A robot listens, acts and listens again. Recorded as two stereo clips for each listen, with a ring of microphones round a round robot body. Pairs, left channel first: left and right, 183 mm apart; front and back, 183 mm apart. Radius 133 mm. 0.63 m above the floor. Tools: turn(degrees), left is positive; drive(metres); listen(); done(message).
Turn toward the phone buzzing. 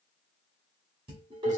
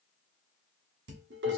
listen()
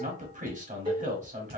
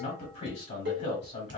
listen()
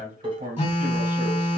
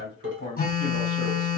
turn(degrees=35)
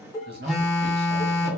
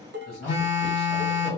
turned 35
done("Found it: a phone buzzing, straight ahead, 1 to 2 m away.")